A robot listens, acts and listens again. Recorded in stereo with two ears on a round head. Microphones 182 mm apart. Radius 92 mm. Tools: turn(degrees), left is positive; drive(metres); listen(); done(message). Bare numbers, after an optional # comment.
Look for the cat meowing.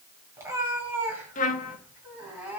turn(-30)
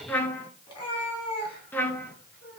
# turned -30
# So it is at 25° left.
turn(25)
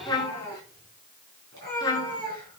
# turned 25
# The cat meowing is now 20° left.
turn(20)
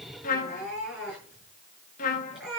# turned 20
done("Facing the cat meowing.")